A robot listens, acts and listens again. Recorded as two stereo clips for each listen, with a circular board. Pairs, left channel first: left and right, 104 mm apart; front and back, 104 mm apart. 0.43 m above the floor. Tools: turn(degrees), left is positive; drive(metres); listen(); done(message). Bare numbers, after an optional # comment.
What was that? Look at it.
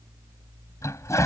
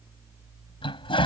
# The toilet flushing: 30° left.
turn(30)
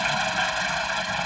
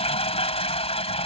done("Found it: a toilet flushing, straight ahead.")